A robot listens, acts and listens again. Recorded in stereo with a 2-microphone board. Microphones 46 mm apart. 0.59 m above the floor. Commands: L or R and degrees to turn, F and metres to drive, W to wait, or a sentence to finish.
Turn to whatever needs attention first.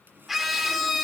R30
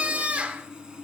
R145
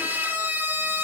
R55
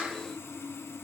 W
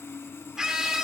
R15
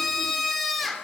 Facing the scream, 1 to 2 m away.